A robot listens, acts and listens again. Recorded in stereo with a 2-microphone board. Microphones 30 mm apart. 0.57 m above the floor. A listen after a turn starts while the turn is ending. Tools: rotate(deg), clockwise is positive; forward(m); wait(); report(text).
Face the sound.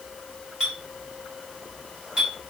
rotate(25)
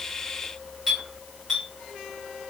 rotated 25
report("Facing the clink.")